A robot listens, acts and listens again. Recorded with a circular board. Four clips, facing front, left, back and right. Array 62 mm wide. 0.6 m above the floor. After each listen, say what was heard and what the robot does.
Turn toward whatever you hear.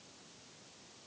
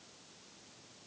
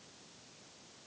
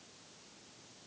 Keep listening.
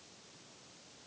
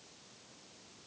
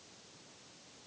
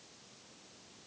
Keep listening.
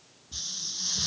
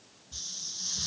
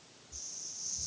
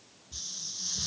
Facing the hiss.